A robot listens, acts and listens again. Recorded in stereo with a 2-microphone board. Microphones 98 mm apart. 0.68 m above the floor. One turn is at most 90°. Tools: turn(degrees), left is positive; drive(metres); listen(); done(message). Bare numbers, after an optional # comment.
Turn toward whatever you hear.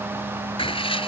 # The writing: about 70° left or 110° left.
turn(70)
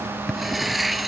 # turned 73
done("Found it: writing, straight ahead.")